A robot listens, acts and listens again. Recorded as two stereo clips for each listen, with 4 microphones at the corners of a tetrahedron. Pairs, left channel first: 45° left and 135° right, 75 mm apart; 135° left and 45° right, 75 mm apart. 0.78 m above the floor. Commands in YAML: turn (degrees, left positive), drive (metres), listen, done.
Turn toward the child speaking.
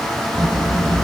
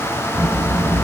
turn: 110
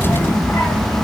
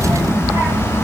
turn: 20
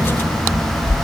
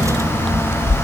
done: "Facing the child speaking."